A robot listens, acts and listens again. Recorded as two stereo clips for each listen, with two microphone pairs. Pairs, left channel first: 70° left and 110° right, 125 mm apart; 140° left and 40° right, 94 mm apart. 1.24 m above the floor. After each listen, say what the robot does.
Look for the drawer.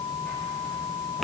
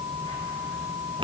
Keep listening.
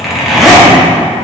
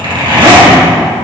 Keep listening.
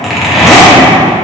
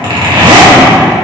I can't make out a drawer, only a zipper.